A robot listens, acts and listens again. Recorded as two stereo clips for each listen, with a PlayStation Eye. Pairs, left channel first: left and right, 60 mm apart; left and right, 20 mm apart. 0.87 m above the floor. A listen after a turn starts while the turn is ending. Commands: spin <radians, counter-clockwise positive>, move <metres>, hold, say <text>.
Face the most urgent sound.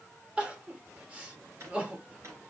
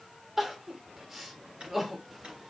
spin -0.35
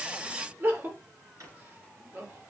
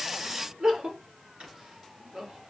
spin -2.44
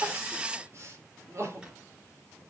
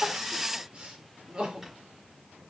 spin -0.96
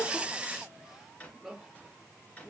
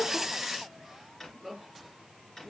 say Found it: crying, straight ahead.